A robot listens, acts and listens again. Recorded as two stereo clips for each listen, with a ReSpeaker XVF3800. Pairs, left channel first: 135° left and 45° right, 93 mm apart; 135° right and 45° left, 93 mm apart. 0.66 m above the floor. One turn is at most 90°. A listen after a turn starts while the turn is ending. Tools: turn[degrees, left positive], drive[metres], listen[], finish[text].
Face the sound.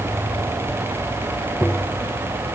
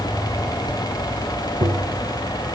Thought: The tapping: 65° left.
Action: turn[65]
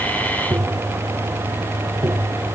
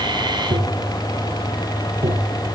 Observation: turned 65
Thought: The tapping is now 10° left.
Action: turn[10]
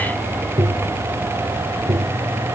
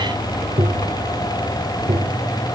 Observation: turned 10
Action: finish[Facing the tapping.]